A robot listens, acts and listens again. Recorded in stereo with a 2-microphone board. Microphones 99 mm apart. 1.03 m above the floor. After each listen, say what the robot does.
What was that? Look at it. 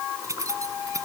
Turn 35° right.
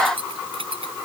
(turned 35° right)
Turn 105° right.
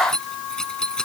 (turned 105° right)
Turn 10° left.
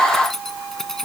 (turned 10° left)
Found it: keys jangling, straight ahead.